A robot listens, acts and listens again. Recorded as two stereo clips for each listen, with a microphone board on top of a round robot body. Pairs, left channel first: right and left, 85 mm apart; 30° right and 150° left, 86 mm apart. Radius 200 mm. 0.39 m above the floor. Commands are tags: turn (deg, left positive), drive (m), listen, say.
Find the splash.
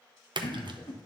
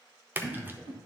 <turn deg="85"/>
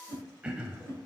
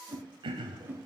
<say>I heard a splash from this way, but can't make it out now.</say>